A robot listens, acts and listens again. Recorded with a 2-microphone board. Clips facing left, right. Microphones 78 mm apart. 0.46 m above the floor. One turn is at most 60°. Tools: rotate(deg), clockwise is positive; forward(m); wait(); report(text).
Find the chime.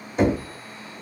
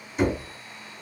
wait()
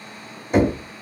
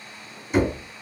wait()
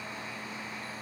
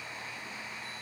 report("I can't make out a chime to turn to.")